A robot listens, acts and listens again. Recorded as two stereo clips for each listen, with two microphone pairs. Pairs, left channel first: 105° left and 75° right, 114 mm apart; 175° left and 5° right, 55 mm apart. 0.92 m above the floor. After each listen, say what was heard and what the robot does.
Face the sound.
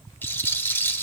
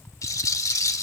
The rattle: 175° left. Turn 175° left.
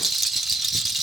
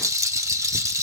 The rattle is now 15° left. Turn 15° left.
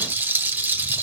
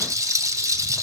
Found it: a rattle, straight ahead, 1 to 2 m away.